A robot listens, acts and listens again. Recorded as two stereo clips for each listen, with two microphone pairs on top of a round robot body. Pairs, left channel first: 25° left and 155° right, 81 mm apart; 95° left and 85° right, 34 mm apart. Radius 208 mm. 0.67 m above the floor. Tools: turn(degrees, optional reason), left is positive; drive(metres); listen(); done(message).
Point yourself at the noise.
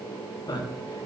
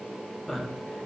turn(degrees=10, reason="The man speaking: 10° left.")
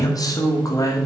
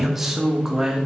turn(degrees=-15, reason="The man speaking is now 15° right.")
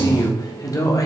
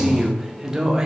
turn(degrees=-15, reason="The man speaking is now 15° right.")
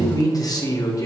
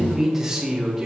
turn(degrees=-15, reason="The man speaking is now 15° right.")
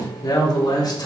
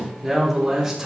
done("Found it: a man speaking, straight ahead, 2 to 4 m away.")